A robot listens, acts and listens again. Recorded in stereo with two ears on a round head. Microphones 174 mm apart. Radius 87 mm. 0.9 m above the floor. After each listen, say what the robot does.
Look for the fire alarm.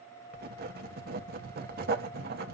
Keep listening.
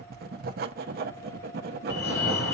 Turn 60° left.
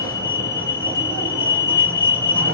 Turn 15° left.
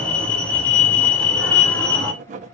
Found it: a fire alarm, straight ahead.